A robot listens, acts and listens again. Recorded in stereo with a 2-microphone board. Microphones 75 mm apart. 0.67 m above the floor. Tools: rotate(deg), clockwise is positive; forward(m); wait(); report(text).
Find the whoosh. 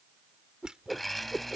rotate(30)
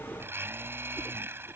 wait()
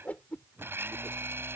rotate(-25)
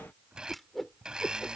report("Found it: a whoosh, straight ahead.")